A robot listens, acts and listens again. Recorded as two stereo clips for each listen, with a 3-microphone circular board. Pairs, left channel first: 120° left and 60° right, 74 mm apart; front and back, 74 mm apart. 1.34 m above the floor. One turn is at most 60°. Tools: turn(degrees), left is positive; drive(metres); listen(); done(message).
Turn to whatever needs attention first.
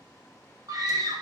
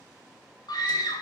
turn(degrees=-25)
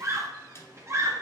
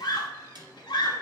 turn(degrees=-10)
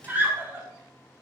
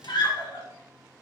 done("Found it: a scream, straight ahead, 2 to 4 m away.")